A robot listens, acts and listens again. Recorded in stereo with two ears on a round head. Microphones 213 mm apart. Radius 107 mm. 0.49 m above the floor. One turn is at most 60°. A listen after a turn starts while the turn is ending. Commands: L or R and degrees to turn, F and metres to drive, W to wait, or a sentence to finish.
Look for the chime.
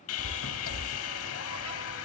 R30
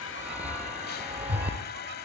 Facing the chime.